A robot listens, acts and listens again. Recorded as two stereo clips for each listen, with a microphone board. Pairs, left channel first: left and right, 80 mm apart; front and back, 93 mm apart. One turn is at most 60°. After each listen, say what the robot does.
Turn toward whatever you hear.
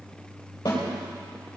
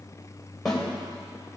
Turn 60° left.
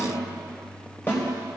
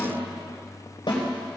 Turn 35° left.
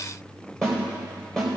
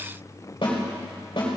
Turn 10° left.
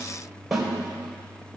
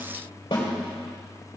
Found it: a snare drum, straight ahead, 2 to 4 m away.